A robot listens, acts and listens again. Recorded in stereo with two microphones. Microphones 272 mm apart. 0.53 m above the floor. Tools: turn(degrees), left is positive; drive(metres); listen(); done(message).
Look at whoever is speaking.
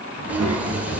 turn(degrees=-70)
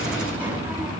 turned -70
done("Found it: a child speaking, straight ahead.")